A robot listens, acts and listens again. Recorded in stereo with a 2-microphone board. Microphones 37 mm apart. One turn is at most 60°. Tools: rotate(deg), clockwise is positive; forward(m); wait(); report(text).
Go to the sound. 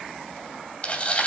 rotate(-35)
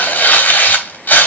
rotate(-60)
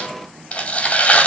rotate(-40)
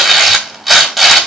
forward(1.0)
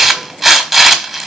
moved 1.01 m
rotate(15)
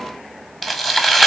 forward(1.0)
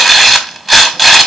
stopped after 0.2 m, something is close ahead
report("I am next to the tearing paper.")